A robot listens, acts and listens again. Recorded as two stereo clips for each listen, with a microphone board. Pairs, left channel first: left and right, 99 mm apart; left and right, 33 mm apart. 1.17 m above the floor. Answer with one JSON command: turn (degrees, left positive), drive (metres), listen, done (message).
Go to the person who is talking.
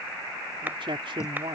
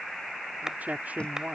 {"turn": -60}
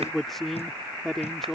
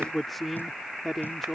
{"drive": 1.0}
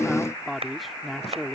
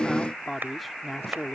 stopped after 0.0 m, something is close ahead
{"done": "Something is in my way. I am facing the man speaking but have not reached it."}